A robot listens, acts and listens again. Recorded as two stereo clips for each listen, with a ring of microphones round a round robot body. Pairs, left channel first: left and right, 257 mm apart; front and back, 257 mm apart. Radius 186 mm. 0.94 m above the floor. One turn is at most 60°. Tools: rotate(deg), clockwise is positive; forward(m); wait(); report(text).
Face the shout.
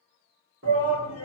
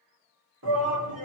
rotate(60)
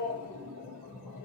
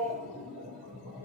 rotate(60)
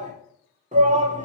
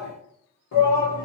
rotate(25)
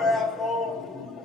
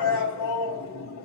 report("Facing the shout, 1 to 2 m away.")